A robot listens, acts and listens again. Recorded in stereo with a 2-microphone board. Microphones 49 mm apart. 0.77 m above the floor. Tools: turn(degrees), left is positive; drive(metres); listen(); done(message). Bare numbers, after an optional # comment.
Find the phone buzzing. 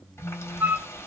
turn(-30)
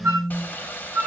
# So it is at 140° right.
turn(-140)
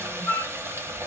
listen()
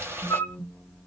# The phone buzzing is now 15° left.
turn(15)
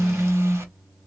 done("Facing the phone buzzing, 2 to 4 m away.")